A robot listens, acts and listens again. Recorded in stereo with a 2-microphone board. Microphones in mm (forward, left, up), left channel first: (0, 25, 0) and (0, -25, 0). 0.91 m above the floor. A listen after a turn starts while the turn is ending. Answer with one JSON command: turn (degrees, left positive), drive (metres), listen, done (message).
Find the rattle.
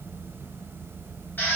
{"listen": true}
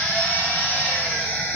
{"listen": true}
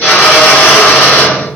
{"done": "I can't make out a rattle, only a drill."}